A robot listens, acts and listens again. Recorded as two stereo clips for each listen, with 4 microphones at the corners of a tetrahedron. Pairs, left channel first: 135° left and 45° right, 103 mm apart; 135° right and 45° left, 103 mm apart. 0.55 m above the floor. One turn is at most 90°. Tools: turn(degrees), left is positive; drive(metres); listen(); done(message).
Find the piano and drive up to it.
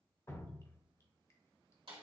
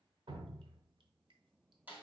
listen()
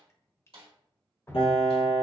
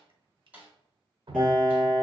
turn(degrees=90)
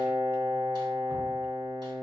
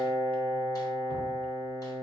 turn(degrees=80)
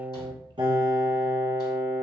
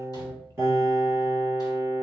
turn(degrees=-15)
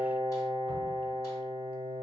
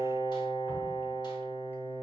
drive(metres=1.0)
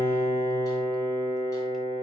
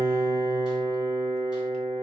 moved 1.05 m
drive(metres=1.0)
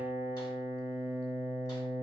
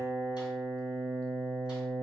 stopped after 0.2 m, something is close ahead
turn(degrees=-10)
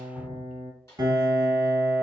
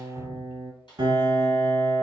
done("I am next to the piano.")